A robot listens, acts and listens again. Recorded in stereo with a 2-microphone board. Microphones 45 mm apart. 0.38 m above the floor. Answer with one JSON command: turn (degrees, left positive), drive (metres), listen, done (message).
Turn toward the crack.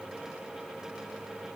{"listen": true}
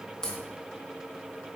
{"turn": 30}
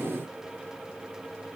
{"listen": true}
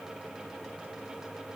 {"done": "I heard a crack, but can't make it out now. It was about 15° right or 135° left."}